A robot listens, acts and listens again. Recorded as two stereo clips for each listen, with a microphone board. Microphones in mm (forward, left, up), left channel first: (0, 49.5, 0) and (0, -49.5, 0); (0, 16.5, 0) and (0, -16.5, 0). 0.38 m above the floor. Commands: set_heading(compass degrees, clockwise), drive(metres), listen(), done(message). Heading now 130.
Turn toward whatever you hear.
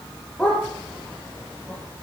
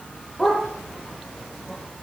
set_heading(100)
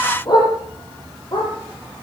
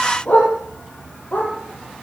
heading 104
set_heading(334)
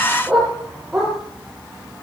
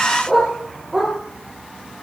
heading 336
done("Found it: a dog barking, straight ahead, over 4 m away.")